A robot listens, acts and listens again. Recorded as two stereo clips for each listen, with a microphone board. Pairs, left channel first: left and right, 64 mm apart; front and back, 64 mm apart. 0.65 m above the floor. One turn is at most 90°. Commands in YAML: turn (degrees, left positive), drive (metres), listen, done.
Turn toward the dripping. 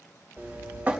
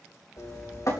turn: -25
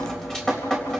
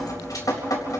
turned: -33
turn: 10
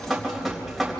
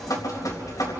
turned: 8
done: "Facing the dripping."